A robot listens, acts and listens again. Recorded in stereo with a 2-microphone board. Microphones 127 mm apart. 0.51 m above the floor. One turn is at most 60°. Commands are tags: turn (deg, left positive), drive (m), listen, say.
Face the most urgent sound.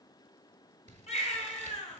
<turn deg="60"/>
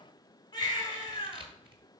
<turn deg="40"/>
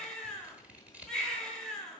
<say>Found it: a baby crying, straight ahead.</say>